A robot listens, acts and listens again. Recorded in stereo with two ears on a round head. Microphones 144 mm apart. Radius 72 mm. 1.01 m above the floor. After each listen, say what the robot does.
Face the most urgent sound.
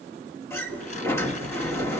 Keep listening.
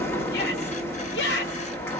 Turn 75° left.
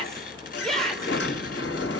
Found it: a shout, straight ahead.